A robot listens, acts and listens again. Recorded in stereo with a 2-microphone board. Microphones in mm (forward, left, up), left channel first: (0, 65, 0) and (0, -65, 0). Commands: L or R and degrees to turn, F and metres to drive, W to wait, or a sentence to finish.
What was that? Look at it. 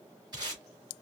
R35
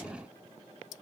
W
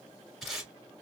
Found it: tape being pulled, straight ahead, 2 to 4 m away.